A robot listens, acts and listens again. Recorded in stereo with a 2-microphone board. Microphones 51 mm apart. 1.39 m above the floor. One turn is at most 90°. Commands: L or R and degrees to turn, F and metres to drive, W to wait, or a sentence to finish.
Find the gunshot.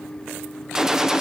R30
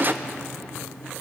R90
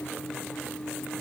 R45
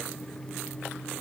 I heard a gunshot from this way, but can't make it out now.